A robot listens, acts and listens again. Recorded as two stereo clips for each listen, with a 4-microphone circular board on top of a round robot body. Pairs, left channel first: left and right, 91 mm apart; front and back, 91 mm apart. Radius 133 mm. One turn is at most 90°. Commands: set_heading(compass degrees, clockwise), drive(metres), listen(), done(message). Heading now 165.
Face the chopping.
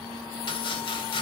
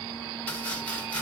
listen()
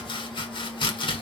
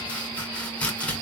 set_heading(90)
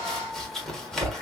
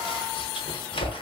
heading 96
done("Facing the chopping, 1 to 2 m away.")